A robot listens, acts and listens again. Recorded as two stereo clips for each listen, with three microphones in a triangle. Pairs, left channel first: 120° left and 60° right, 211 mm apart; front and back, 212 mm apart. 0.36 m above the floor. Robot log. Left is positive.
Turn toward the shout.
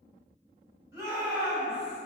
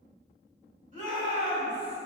note: The shout: 135° right.
cmd yaw -135
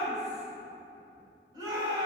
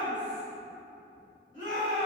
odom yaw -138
end: Found it: a shout, straight ahead.